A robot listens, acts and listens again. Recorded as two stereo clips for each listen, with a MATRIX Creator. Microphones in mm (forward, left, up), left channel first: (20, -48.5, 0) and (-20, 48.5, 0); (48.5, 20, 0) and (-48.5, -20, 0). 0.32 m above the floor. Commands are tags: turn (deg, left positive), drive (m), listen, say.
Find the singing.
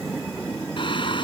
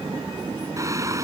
<turn deg="-100"/>
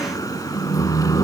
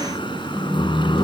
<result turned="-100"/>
<turn deg="-15"/>
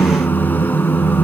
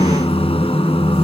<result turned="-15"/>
<say>Found it: singing, straight ahead.</say>